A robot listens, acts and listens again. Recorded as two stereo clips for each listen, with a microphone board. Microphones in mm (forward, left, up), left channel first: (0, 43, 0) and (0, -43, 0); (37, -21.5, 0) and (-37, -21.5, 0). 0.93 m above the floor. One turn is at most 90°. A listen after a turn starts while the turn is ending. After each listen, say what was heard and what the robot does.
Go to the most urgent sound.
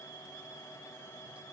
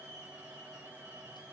Keep listening.
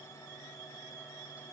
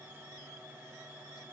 Keep listening.
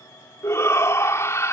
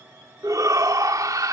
The shout: 145° left. Turn 90° left.
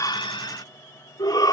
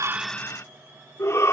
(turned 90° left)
The shout is now 50° left. Turn 50° left.
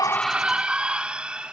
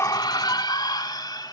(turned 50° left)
The shout is now 15° right. Turn 15° right.
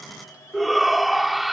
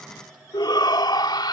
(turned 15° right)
Drive 1.0 m forward.
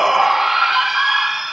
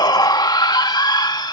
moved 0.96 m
Drive 1.0 m forward.
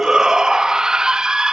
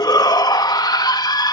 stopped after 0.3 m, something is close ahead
The shout is now 10° right. Turn 10° right.
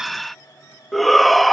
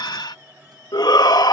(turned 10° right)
I am next to the shout.